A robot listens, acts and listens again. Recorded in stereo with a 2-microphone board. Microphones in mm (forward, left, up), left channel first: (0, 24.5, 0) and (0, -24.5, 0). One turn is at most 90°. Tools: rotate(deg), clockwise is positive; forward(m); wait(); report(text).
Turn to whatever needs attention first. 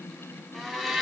wait()
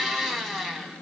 wait()
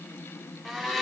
report("I can't make out anything urgent to turn to.")